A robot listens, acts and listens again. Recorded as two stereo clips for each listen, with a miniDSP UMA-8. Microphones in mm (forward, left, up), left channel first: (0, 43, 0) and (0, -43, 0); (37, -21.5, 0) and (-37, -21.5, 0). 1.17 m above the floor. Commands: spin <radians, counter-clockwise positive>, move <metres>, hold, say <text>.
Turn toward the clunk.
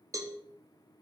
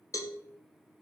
hold
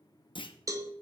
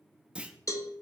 spin 1.83
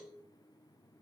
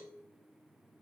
say I heard a clunk from this way, but can't make it out now.